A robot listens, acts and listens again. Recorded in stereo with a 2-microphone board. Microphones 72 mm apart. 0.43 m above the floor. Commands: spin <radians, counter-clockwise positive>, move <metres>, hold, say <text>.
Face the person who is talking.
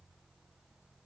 hold
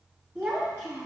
spin -0.44
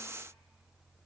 hold
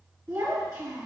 spin -2.27
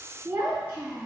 spin -0.52
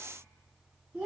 spin -0.26
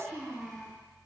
say Facing the child speaking, 2 to 4 m away.